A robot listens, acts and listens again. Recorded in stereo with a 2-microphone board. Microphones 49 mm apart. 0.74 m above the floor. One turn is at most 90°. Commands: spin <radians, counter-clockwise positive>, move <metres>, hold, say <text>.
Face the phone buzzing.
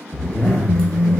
spin -0.96
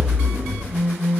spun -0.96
spin -0.96
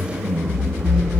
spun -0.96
hold
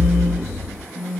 say Found it: a phone buzzing, straight ahead, under 1 m away.